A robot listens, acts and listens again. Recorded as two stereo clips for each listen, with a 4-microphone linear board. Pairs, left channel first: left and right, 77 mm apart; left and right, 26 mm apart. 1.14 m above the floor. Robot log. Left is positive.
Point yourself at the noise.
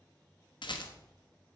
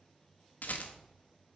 note: The rattle: about 70° left or 110° left.
cmd yaw +70
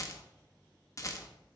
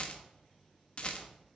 note: So it is at 40° left.
cmd yaw +40
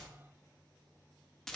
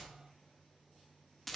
end: Facing the rattle.